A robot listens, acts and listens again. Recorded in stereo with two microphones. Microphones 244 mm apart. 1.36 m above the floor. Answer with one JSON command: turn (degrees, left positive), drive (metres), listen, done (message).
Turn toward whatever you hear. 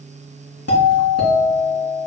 {"turn": 90}
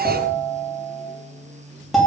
{"done": "Facing the doorbell."}